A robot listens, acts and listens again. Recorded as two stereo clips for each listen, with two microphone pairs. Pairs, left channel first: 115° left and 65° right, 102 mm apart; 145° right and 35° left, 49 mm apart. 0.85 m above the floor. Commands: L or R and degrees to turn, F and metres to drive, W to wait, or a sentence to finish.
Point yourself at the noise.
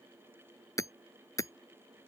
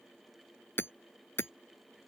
L175
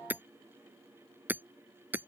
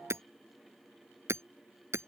L10
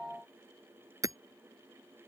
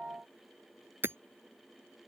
Facing the hammering.